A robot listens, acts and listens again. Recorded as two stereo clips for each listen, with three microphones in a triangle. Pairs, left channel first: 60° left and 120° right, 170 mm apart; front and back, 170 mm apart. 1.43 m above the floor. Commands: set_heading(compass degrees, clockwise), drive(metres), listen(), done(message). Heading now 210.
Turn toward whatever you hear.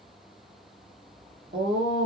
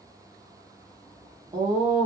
set_heading(335)
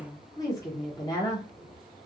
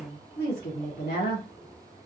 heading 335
set_heading(345)
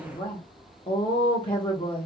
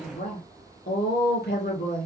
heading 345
done("Facing the woman speaking, 1 to 2 m away.")